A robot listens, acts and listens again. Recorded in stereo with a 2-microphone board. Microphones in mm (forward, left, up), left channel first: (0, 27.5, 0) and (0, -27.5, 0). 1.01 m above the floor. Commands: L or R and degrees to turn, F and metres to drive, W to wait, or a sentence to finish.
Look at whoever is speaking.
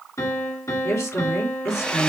L70
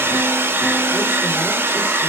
W
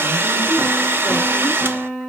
W
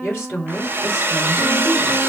L40
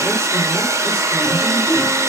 W
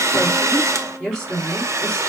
Found it: a woman speaking, straight ahead.